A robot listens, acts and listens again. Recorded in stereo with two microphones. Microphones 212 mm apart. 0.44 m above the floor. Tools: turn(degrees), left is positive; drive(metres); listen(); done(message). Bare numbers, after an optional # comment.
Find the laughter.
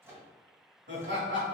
# The laughter: about 65° right or 115° right.
turn(-65)
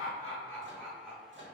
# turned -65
# So it is at 10° right.
turn(-10)
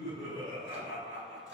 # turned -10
# The laughter is now 10° left.
turn(10)
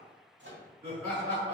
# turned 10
# The laughter is now 10° left.
turn(10)
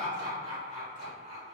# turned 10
done("Facing the laughter.")